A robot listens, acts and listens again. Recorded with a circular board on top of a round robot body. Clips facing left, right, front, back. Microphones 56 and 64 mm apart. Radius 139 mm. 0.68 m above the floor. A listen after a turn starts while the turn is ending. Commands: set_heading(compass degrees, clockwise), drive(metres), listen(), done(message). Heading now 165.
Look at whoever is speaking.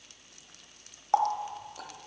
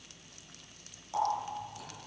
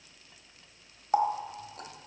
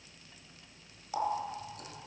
listen()
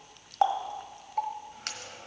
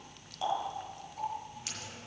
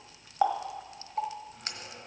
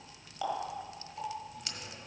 listen()
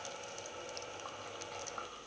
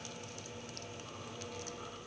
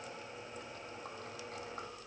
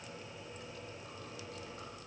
done("I can't make out anyone speaking, only a running tap.")